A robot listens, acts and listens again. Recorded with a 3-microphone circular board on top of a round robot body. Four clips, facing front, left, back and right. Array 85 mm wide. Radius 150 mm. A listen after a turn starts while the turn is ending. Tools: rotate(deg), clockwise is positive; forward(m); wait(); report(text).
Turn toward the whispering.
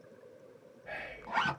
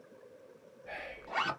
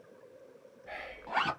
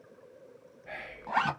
rotate(35)
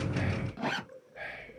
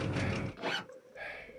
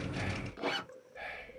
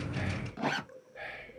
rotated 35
report("Facing the whispering.")